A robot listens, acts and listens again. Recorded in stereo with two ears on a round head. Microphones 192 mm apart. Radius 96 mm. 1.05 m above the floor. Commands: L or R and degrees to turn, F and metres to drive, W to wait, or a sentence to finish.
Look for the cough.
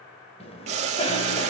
L30
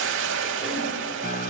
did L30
W
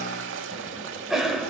Found it: a cough, straight ahead.